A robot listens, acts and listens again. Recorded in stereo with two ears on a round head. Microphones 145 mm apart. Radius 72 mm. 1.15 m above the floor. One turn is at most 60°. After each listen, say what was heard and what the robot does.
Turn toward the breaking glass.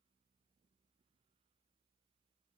Keep listening.
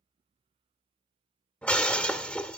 Turn 30° left.
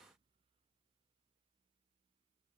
Keep listening.
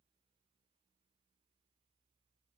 I heard breaking glass, but can't make it out now. It was about 20° right or 140° left.